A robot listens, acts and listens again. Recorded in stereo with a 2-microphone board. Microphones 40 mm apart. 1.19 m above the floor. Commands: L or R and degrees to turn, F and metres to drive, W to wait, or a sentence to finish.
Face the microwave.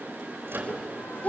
R70
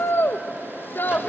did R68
W
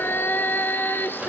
W
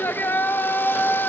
I heard a microwave, but can't make it out now. It was about straight ahead or 40° right.